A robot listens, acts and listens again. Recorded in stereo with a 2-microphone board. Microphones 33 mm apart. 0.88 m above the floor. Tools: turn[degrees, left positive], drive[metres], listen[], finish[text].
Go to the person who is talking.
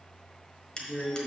Thought: The woman speaking: about 20° left or 160° left.
Action: turn[20]
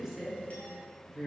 Action: drive[1.0]
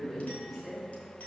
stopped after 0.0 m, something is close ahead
Action: finish[Something is in my way. I am facing the woman speaking but have not reached it.]